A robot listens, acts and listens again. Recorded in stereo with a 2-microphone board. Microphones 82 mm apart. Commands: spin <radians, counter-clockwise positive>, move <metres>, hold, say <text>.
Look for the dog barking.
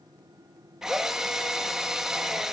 hold
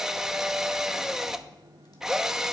hold
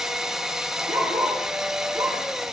spin -0.70
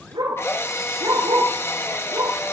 spin -1.75
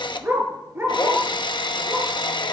spin -0.52
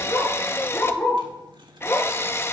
spin 0.35
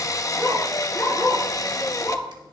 say Facing the dog barking, 2 to 4 m away.